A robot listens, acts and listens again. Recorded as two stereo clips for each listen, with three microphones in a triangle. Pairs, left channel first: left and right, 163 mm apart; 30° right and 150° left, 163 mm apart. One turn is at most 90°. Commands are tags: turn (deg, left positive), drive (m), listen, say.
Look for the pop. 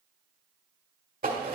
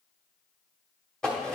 <listen/>
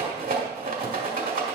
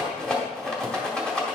<listen/>
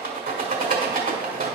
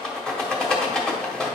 <say>I can't make out a pop, only a rattle.</say>